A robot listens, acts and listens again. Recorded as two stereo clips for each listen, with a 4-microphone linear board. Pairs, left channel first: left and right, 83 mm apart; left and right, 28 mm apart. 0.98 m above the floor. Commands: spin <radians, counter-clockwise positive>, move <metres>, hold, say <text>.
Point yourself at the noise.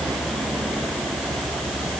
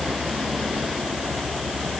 hold
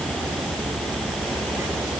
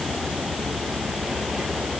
hold
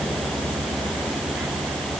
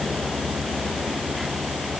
say I can't make out anything to turn to.